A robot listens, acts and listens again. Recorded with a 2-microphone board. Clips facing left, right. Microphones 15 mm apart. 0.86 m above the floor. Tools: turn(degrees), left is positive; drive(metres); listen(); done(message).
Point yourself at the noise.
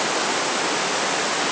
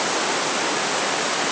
listen()
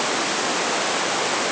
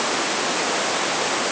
listen()
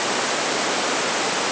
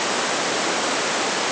done("I can't make out anything.")